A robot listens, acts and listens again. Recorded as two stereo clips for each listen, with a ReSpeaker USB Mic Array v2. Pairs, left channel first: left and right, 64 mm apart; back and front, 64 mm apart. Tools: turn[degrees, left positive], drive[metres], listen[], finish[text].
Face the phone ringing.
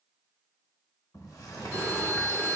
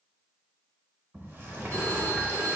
Thought: The phone ringing: 30° right.
Action: turn[-30]
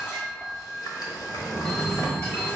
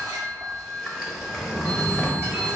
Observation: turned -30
Action: finish[Facing the phone ringing, 1 to 2 m away.]